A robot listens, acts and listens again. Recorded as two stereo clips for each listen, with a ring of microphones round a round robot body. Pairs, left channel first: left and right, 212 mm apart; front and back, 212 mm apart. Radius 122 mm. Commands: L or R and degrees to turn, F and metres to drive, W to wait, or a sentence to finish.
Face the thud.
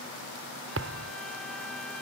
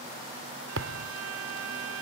R135
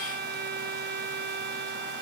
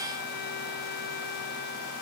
Facing where the thud came from. I can't hear it now.